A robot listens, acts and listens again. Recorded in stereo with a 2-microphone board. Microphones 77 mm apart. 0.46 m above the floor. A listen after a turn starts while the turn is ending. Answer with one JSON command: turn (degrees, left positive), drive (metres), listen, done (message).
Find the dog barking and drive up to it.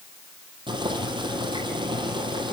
{"listen": true}
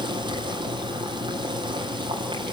{"listen": true}
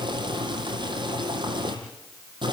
{"done": "I can't make out a dog barking to turn to."}